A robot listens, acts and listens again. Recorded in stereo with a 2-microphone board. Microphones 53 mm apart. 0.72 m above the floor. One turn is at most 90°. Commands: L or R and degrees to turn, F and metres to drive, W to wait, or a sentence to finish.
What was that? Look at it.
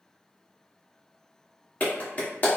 L35
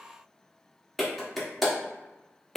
Found it: a clap, straight ahead.